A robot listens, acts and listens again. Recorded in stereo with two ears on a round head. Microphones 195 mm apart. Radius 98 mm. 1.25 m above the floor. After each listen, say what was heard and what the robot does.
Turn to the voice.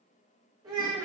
The child speaking: about 20° right or 160° right. Turn 20° right.
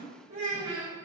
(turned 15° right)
So it is at 145° right. Turn 145° right.
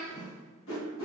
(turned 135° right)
The child speaking is now 10° right. Turn 10° right.
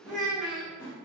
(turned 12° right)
Found it: a child speaking, straight ahead.